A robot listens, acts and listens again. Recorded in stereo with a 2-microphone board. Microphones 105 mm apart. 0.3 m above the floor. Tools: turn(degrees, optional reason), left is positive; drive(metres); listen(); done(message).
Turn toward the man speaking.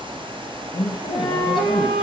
turn(degrees=50, reason="The man speaking: about 50° left or 130° left.")
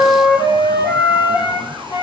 listen()
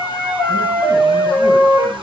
listen()
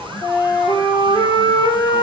done("I heard a man speaking, but can't make it out now. It was about straight ahead or 80° left.")